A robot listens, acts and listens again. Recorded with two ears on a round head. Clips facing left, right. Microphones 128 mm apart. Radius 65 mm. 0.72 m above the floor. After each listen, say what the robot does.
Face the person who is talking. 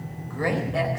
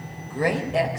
Turn 20° right.
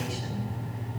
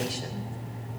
Keep listening.
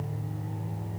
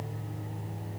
Keep listening.
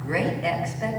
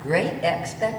Turn 135° right.
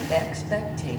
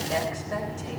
Turn 20° left.
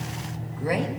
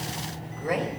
Found it: a woman speaking, straight ahead, 2 to 4 m away.